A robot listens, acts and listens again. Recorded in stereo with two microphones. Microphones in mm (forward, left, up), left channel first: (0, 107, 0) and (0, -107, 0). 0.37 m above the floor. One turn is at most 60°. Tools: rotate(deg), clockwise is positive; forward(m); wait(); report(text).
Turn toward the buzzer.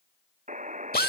rotate(35)
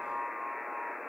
report("Facing the buzzer.")